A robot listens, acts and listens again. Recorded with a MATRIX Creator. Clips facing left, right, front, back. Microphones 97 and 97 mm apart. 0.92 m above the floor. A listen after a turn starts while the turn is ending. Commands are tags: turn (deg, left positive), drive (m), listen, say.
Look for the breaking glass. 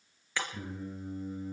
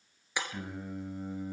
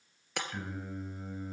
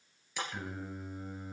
<turn deg="-20"/>
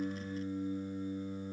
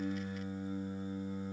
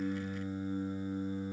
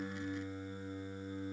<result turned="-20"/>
<say>I heard breaking glass from this way, but can't make it out now.</say>